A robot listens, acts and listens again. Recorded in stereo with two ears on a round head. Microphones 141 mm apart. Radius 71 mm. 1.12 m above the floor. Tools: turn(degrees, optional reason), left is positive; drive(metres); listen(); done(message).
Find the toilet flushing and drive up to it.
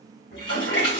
turn(degrees=75, reason="The toilet flushing: about 75° left or 105° left.")
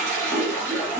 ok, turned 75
turn(degrees=15, reason="So it is at 15° left.")
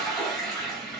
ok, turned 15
drive(metres=1.0)
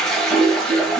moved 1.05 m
drive(metres=1.0)
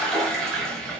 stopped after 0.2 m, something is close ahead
done("Arrived at the toilet flushing, straight ahead.")